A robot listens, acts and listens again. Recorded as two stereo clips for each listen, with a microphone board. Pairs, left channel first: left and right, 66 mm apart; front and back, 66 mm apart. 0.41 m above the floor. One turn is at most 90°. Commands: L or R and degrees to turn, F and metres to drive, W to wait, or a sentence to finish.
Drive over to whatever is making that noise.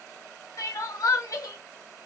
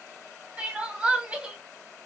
L90
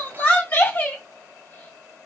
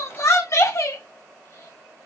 L30
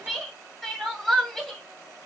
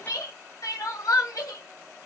F1.0
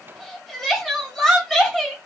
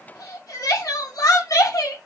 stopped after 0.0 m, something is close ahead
Blocked. The crying is further on, straight ahead.